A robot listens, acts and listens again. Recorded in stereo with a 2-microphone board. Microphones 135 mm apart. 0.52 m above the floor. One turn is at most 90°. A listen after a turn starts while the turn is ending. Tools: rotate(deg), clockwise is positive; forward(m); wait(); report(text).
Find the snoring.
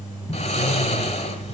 rotate(-50)
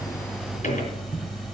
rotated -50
wait()
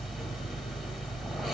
wait()
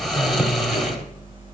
report("Facing the snoring.")